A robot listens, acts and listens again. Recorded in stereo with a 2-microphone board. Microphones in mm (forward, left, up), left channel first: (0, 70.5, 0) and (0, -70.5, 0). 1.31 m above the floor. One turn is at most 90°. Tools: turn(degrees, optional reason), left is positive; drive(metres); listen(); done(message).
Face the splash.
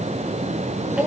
listen()
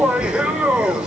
listen()
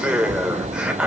done("I can't make out a splash to turn to.")